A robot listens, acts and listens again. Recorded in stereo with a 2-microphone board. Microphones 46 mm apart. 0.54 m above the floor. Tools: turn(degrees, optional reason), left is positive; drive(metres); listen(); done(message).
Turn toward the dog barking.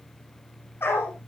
turn(degrees=55, reason="The dog barking: about 55° left or 125° left.")
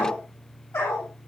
turn(degrees=80, reason="So it is at 80° left.")
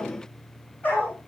turn(degrees=30, reason="The dog barking is now 30° left.")
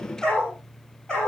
turn(degrees=15, reason="The dog barking is now 15° left.")
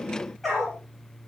done("Facing the dog barking.")